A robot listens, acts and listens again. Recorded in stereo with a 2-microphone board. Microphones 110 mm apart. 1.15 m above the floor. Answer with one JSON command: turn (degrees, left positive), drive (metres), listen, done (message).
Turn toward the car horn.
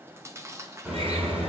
{"turn": -15}
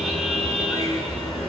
{"done": "Found it: a car horn, straight ahead."}